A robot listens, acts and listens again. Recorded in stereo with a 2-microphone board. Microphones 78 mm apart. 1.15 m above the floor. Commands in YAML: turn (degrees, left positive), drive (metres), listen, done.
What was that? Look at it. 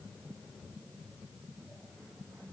listen: true
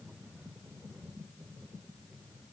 listen: true
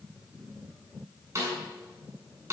turn: -35
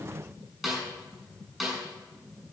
done: "Facing the snare drum, over 4 m away."